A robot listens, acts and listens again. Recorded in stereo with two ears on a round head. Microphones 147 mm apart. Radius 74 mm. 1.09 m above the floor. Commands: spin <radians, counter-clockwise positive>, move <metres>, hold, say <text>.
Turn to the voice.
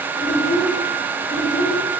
spin 1.13
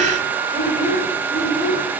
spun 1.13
spin 0.87
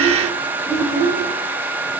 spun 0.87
spin 0.17
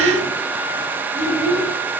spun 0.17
say Found it: a child speaking, straight ahead.